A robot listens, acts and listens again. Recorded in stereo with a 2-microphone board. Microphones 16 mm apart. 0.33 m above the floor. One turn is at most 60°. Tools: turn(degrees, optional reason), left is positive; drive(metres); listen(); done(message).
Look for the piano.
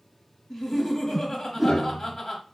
turn(degrees=45, reason="The piano: about 45° left or 135° left.")
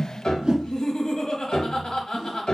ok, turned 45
turn(degrees=60, reason="So it is at 80° left.")
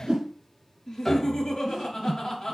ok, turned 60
turn(degrees=25, reason="The piano is now 25° left.")
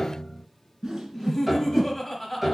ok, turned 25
done("Facing the piano, under 1 m away.")